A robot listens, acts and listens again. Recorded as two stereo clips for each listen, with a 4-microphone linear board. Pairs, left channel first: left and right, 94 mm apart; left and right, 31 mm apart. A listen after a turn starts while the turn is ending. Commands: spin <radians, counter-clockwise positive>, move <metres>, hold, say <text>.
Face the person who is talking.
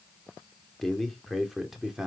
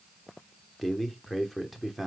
spin -0.52
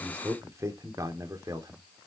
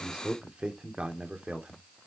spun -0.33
spin -2.44
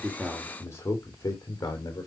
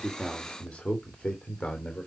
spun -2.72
spin 0.70
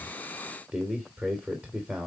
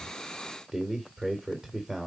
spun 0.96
spin -0.26
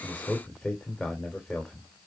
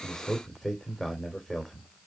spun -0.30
say Facing the man speaking.